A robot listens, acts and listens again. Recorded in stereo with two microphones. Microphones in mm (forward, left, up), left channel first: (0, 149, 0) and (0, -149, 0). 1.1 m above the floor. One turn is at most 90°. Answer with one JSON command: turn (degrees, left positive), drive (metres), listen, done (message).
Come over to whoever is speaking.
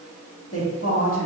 {"turn": 45}
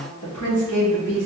{"turn": 90}
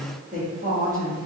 {"turn": -25}
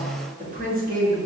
{"turn": -30}
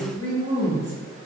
{"turn": -25}
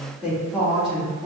{"drive": 1.0}
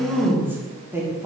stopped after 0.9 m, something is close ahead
{"done": "I am next to the woman speaking."}